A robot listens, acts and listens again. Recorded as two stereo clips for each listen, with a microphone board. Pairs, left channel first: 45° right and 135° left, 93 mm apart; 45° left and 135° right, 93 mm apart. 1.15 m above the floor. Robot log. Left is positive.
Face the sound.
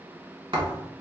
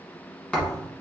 note: The thud: 125° left.
cmd yaw +125
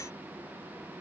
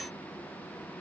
end: I heard a thud from this way, but can't make it out now.